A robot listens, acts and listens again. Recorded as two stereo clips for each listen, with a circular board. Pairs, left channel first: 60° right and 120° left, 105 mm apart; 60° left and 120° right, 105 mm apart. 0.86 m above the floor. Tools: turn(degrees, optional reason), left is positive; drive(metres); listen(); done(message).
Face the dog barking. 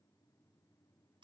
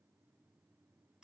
listen()
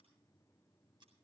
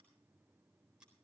listen()
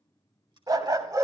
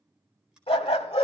turn(degrees=65, reason="The dog barking: 65° left.")
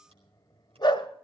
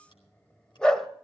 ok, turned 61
turn(degrees=-25, reason="The dog barking is now 25° right.")
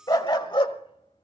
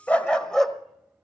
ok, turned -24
turn(degrees=-25, reason="The dog barking is now 25° right.")
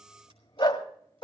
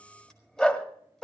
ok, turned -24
turn(degrees=-20, reason="The dog barking is now 20° right.")
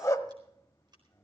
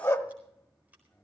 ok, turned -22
done("Found it: a dog barking, straight ahead.")